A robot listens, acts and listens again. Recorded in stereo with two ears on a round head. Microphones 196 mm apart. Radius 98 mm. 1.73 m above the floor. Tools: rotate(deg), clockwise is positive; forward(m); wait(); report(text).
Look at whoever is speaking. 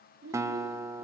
rotate(70)
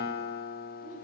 wait()
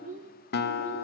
rotate(35)
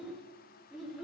report("Facing the child speaking, over 4 m away.")